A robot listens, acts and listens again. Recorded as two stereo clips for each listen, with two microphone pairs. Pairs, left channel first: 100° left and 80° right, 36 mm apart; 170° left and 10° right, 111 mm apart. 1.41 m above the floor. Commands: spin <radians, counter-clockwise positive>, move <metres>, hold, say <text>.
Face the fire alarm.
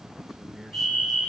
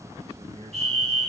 spin 1.57
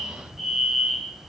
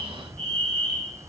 say Facing the fire alarm, 2 to 4 m away.